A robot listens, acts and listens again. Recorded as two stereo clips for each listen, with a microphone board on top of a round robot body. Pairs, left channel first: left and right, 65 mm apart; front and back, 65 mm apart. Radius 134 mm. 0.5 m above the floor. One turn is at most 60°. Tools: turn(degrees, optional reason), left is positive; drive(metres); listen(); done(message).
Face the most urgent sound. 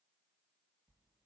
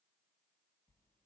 listen()
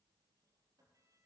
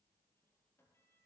listen()
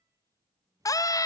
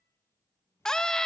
turn(degrees=60, reason="The scream: 80° left.")
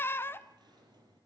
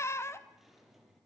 turn(degrees=40, reason="The scream is now 40° left.")
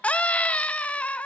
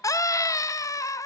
turn(degrees=25, reason="The scream is now 25° left.")
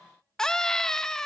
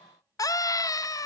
turn(degrees=10, reason="The scream is now 10° left.")
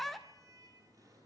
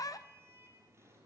done("Facing the scream, 1 to 2 m away.")